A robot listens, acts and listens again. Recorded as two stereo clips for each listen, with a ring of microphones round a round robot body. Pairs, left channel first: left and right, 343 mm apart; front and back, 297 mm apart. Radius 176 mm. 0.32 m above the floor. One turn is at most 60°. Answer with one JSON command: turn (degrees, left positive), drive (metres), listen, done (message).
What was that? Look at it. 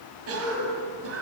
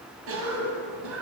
{"turn": -60}
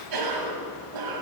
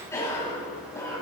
{"turn": -60}
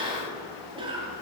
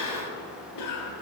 {"turn": -15}
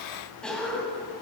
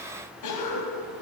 {"done": "Facing the cough, 2 to 4 m away."}